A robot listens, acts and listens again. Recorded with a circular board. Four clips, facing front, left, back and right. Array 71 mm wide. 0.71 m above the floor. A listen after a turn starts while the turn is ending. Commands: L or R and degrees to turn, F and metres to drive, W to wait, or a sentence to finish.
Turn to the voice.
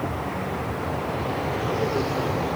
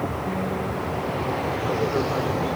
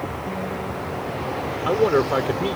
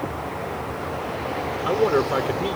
R150
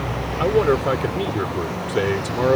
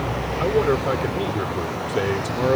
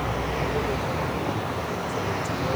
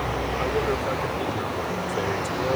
L15
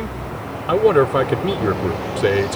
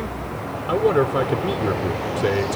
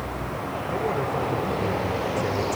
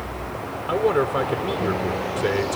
Found it: a man speaking, straight ahead.